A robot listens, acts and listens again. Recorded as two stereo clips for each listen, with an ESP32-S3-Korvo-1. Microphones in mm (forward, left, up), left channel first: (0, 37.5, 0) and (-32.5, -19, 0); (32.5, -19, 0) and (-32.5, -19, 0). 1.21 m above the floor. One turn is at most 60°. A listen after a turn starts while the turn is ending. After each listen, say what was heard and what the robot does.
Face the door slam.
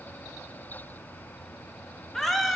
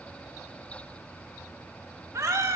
Keep listening.
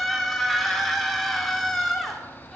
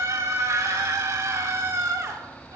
Keep listening.
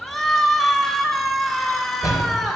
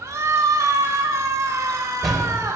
The door slam: 90° left. Turn 60° left.
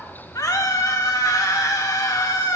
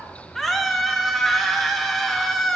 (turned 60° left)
Nothing new. It was at 30° left. Turn 30° left.
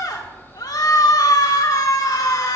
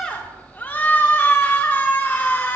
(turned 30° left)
I heard a door slam from this way, but can't make it out now.